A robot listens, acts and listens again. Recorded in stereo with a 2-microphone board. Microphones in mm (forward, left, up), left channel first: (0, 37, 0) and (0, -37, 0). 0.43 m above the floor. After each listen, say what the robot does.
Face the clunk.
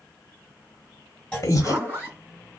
Turn 30° left.
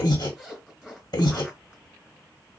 Keep listening.
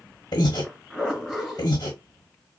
I heard a clunk, but can't make it out now. It was about 20° right or 140° left.